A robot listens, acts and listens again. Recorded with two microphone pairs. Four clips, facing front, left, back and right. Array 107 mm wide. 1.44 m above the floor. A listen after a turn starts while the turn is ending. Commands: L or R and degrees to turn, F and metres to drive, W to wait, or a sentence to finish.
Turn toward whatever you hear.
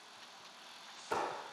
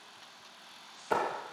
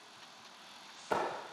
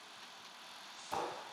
L110
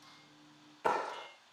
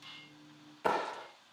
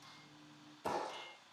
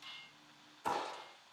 L50
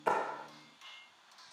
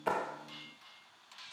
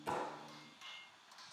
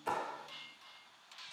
W
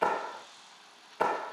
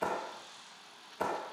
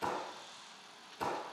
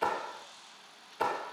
R10
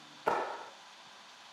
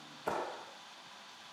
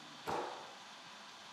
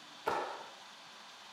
Facing the clap.